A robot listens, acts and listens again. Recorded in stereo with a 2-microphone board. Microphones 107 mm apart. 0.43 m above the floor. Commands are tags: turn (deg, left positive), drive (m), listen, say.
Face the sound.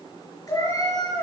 <turn deg="30"/>
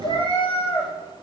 <turn deg="125"/>
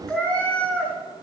<turn deg="15"/>
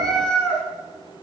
<turn deg="10"/>
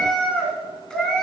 <turn deg="10"/>
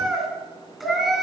<say>Facing the cat meowing, 2 to 4 m away.</say>